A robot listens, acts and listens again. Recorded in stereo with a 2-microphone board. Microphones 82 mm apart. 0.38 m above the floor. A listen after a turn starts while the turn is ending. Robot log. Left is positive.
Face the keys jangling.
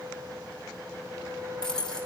cmd yaw +30
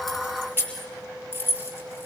note: So it is at 25° right.
cmd yaw -25
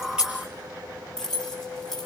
end: Found it: keys jangling, straight ahead.